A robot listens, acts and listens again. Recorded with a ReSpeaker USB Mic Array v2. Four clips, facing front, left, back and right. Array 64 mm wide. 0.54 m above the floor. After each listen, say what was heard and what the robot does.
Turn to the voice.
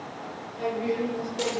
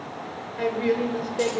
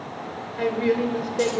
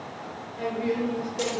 The woman speaking: 140° left. Turn 140° left.
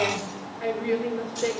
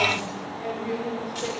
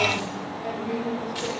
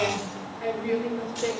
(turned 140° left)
The woman speaking is now 25° right. Turn 25° right.
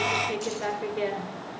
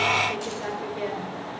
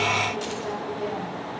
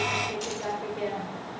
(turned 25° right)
Facing the woman speaking.